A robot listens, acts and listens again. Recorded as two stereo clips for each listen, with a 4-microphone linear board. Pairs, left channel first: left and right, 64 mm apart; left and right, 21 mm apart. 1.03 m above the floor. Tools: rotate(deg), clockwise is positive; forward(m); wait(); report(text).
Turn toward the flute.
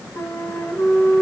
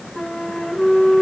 rotate(-70)
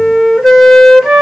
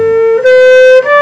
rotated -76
report("Found it: a flute, straight ahead, 1 to 2 m away.")